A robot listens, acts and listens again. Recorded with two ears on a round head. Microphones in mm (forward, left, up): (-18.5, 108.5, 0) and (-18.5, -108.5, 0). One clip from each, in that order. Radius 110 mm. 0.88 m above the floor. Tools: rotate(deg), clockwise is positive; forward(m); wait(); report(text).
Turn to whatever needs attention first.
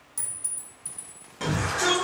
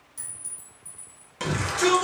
rotate(30)
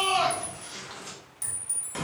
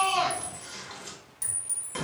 report("Found it: a shout, straight ahead, 1 to 2 m away.")